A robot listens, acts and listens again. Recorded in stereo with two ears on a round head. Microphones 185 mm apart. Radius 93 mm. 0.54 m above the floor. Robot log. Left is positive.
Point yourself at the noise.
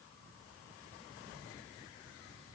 cmd idle
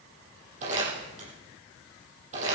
note: The crumpling: about 35° right or 145° right.
cmd yaw -35
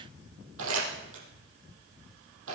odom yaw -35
note: So it is at 110° right.
cmd yaw -110
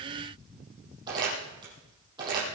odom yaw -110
note: The crumpling is now 20° right.
cmd yaw -20
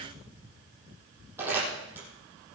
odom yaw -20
note: The crumpling is now 10° right.
cmd yaw -10
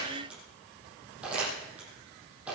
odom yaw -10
end: Found it: crumpling, straight ahead, over 4 m away.